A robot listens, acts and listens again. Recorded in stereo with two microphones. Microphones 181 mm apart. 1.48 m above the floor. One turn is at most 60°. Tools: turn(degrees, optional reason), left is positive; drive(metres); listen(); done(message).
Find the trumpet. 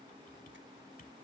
listen()
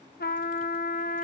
turn(degrees=55, reason="The trumpet: about 55° left or 125° left.")
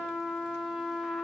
done("Facing the trumpet, under 1 m away.")